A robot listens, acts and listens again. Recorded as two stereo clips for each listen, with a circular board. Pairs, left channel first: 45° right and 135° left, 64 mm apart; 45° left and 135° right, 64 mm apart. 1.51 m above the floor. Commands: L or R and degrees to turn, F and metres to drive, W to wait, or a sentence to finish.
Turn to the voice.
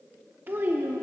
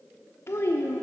L80
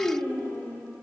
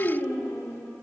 L10
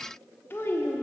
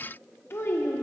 Found it: a child speaking, straight ahead, under 1 m away.